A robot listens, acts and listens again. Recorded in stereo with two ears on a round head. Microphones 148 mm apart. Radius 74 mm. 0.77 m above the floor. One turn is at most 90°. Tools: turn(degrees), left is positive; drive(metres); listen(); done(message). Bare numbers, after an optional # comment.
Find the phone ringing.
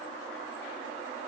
listen()
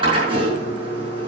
listen()
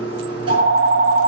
# The phone ringing: about 60° right or 120° right.
turn(-60)
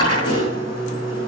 listen()
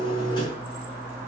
# So it is at 15° right.
turn(-15)
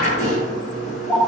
done("Facing the phone ringing, 1 to 2 m away.")